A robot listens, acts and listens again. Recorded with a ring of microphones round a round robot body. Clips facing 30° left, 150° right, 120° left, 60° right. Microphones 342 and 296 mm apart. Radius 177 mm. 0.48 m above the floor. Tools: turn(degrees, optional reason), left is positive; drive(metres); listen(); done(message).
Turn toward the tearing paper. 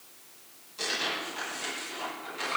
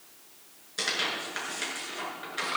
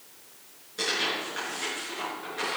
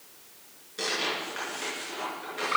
turn(degrees=-150, reason="The tearing paper: 150° right.")
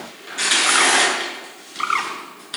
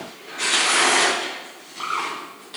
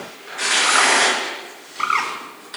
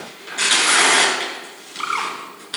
turn(degrees=-25, reason="The tearing paper is now 25° right.")
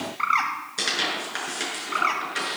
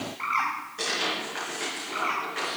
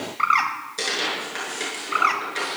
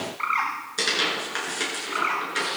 done("Found it: tearing paper, straight ahead, over 4 m away.")